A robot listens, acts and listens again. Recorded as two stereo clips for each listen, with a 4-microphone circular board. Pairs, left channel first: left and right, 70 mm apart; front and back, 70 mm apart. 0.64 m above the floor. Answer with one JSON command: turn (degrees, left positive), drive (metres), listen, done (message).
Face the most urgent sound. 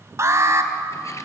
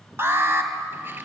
{"turn": -130}
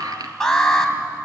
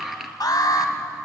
{"turn": 10}
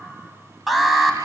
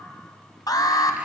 {"done": "Found it: an alarm, straight ahead, 2 to 4 m away."}